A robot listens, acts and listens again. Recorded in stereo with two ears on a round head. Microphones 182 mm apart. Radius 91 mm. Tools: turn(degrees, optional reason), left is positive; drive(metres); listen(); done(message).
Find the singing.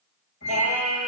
turn(degrees=30)
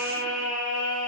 turn(degrees=140, reason="So it is at 140° left.")
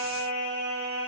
turn(degrees=-15, reason="The singing is now 15° right.")
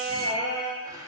done("Found it: singing, straight ahead, over 4 m away.")